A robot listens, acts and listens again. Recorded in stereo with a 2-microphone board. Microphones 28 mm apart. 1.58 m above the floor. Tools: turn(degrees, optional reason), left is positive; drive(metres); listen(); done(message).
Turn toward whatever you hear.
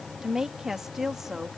turn(degrees=-30)
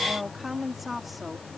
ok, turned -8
turn(degrees=-30)
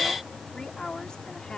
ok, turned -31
turn(degrees=35, reason="So it is at 35° left.")
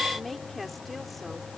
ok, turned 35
done("Facing the woman speaking.")